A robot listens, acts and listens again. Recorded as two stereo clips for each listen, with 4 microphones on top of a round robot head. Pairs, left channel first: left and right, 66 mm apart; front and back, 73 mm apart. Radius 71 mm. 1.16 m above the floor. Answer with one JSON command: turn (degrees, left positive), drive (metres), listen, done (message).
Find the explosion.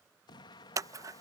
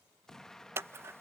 {"turn": 80}
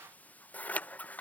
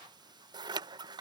{"done": "I heard an explosion from this way, but can't make it out now."}